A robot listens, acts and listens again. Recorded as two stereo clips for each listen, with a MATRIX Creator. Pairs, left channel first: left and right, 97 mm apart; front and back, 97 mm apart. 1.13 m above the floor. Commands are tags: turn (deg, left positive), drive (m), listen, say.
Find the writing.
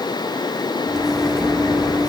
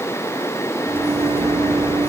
<listen/>
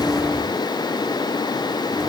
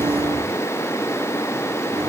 <listen/>
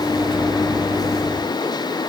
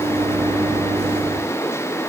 <say>I can't make out writing, only a microwave.</say>